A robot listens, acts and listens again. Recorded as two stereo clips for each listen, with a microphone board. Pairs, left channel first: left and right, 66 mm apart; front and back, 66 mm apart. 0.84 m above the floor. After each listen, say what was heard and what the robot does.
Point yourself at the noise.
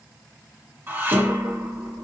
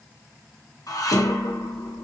The dishes clattering: 30° right. Turn 30° right.
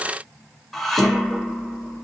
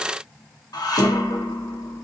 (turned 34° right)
Found it: dishes clattering, straight ahead.